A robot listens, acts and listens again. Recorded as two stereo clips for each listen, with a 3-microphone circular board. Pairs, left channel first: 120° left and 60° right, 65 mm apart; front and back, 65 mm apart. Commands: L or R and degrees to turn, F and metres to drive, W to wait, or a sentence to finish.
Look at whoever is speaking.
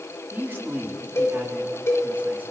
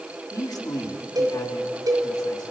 Found it: a man speaking, straight ahead, 2 to 4 m away.